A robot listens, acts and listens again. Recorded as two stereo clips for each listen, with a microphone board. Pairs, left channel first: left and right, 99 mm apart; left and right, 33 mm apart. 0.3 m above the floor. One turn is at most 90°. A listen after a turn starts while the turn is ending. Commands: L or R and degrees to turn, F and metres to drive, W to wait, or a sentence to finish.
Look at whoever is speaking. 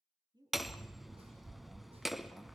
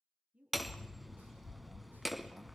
R45
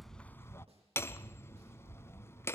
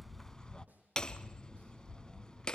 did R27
W
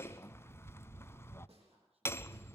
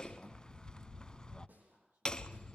R90
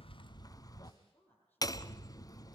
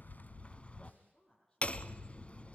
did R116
L20
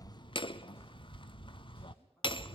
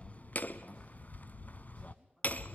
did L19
W
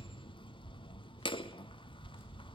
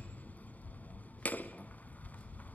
W
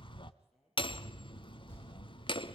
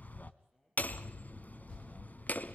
Facing where the woman speaking came from. I can't hear it now.